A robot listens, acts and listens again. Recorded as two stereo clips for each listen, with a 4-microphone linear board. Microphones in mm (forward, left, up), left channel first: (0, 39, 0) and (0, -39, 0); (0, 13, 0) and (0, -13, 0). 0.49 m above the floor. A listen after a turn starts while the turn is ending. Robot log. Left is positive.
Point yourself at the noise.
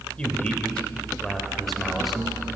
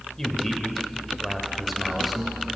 cmd yaw +30
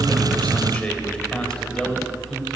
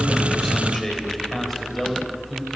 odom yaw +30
cmd yaw +30
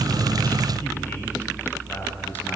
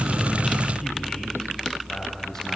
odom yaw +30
cmd idle
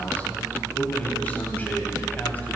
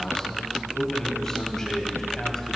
note: The man speaking: about 20° left or 160° left.
cmd yaw +20
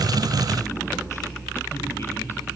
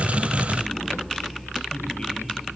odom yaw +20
cmd idle
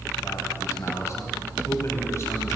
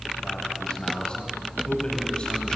note: So it is at 140° left.
cmd yaw +140
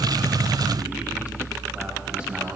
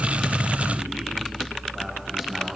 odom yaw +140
cmd idle
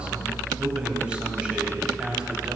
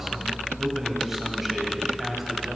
note: The man speaking is now 15° right.
cmd yaw -15
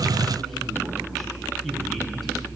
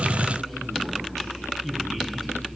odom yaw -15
cmd idle
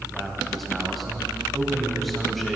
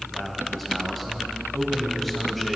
end: Found it: a man speaking, straight ahead, 2 to 4 m away.